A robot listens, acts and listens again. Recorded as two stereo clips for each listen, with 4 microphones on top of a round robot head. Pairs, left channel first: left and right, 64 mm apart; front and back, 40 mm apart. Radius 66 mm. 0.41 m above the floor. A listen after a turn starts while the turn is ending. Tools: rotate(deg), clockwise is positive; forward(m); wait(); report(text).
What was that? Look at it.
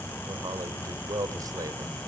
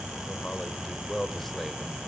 rotate(90)
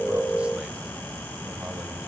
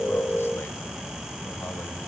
wait()
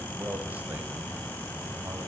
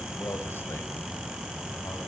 rotate(25)
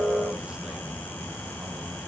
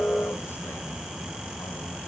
wait()
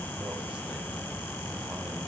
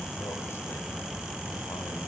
wait()
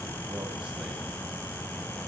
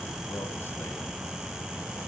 report("I heard a man speaking from this way, but can't make it out now.")